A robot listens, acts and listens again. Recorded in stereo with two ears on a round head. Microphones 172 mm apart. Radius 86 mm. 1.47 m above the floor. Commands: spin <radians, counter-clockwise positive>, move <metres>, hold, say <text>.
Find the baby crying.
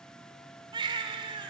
spin -0.44
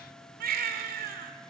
spin -2.27
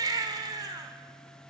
spin -0.35
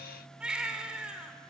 say Facing the baby crying, 2 to 4 m away.